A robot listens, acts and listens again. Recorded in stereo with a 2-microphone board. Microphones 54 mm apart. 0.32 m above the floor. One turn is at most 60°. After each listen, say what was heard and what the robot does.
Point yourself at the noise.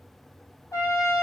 Turn 60° left.
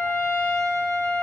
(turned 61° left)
So it is at 40° left. Turn 40° left.
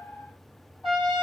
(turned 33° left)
Found it: a trumpet, straight ahead, 2 to 4 m away.